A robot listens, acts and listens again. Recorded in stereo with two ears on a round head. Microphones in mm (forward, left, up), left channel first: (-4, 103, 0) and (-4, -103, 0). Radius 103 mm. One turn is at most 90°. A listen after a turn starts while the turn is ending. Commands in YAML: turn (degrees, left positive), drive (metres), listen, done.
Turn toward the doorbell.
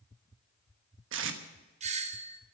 turn: -30
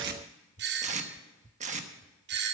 turn: -90
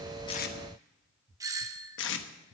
turn: -20
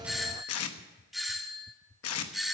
done: "Found it: a doorbell, straight ahead."